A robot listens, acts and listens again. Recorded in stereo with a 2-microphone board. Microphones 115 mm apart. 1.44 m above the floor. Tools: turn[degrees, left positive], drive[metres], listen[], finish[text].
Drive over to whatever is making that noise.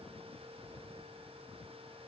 Action: listen[]
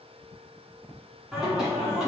Action: turn[-30]
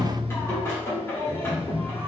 Thought: So it is at 25° left.
Action: turn[25]
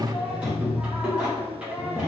Thought: The singing is now 10° right.
Action: turn[-10]
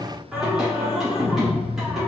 Action: drive[1.0]
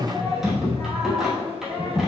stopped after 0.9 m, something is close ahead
Action: finish[Arrived at the singing, straight ahead.]